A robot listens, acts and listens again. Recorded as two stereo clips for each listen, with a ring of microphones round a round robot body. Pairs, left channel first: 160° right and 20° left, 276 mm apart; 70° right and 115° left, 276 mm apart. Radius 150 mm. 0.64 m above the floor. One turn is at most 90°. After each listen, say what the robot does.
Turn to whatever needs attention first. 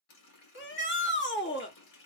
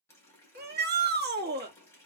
Turn 90° left.
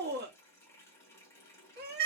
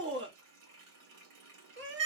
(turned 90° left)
Turn 70° left.
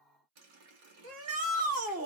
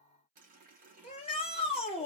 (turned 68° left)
Found it: a shout, straight ahead.